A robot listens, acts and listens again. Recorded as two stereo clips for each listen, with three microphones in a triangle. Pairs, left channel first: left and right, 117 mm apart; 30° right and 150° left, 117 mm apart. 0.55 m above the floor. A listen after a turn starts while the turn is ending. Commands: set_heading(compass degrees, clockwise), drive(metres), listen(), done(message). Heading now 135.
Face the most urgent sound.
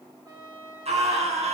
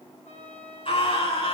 set_heading(200)
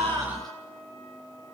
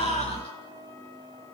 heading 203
listen()
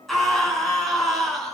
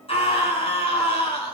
done("Found it: a scream, straight ahead.")